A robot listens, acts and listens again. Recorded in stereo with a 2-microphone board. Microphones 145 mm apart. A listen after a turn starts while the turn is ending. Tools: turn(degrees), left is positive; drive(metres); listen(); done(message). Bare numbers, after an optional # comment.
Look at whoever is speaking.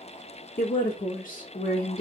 # The woman speaking: about 70° left or 110° left.
turn(70)
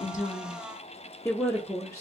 # So it is at 20° left.
turn(20)
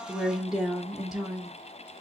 done("Facing the woman speaking.")